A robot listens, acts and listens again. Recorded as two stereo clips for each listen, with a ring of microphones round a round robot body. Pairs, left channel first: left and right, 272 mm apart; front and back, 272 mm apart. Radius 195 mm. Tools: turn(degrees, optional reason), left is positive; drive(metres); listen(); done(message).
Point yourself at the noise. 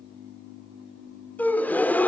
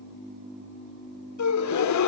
done("Facing the gasp.")